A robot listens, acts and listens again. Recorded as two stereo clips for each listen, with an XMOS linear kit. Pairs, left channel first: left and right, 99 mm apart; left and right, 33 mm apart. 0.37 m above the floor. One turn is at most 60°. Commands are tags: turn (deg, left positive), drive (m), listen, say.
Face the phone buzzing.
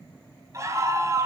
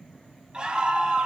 <listen/>
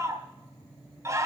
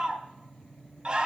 <listen/>
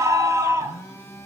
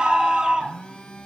<turn deg="30"/>
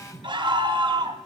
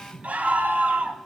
<say>Found it: a phone buzzing, straight ahead.</say>